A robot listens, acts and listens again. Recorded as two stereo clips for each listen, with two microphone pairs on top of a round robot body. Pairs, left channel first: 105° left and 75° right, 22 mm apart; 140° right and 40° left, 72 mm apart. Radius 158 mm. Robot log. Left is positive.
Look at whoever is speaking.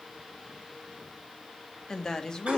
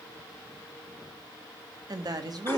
note: The woman speaking: 40° left.
cmd yaw +40
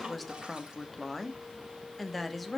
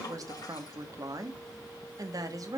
note: The woman speaking is now 10° left.
cmd yaw +10
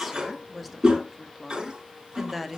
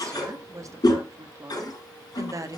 end: Found it: a woman speaking, straight ahead, 1 to 2 m away.